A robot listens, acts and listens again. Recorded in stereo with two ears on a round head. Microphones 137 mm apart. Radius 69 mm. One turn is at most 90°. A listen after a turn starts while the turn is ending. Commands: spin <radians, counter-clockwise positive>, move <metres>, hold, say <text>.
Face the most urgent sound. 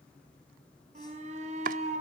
spin -0.87
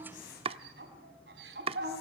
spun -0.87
spin -1.40
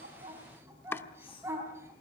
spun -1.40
spin -0.26
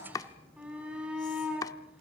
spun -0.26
say Found it: a shout, straight ahead, 2 to 4 m away.